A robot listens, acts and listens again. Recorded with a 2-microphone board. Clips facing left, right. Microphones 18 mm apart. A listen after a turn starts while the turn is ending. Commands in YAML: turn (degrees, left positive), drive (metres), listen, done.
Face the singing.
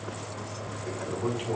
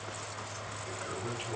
listen: true
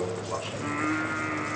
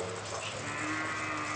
turn: 70
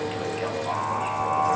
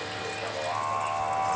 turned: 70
turn: 25
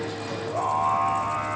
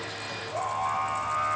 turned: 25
turn: 10
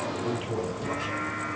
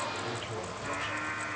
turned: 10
done: "Facing the singing, over 4 m away."